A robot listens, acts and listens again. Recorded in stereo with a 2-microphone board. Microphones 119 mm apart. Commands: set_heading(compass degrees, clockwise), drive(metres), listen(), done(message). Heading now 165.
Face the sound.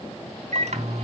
set_heading(240)
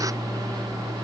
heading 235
set_heading(270)
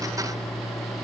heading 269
done("Facing the microwave, 2 to 4 m away.")